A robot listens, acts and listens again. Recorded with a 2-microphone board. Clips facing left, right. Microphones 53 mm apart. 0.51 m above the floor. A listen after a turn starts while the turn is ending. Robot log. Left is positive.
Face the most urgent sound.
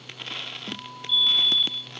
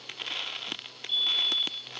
note: The fire alarm: about 50° right or 130° right.
cmd yaw -50
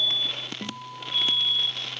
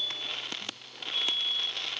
note: So it is at 75° right.
cmd yaw -75
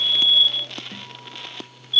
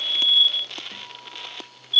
end: Facing the fire alarm.